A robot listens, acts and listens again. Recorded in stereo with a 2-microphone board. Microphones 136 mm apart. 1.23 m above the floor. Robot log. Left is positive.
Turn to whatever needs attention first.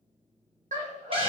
note: The scream: about 65° right or 115° right.
cmd yaw -65
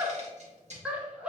note: So it is at 10° right.
cmd yaw -10
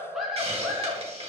end: Facing the scream, under 1 m away.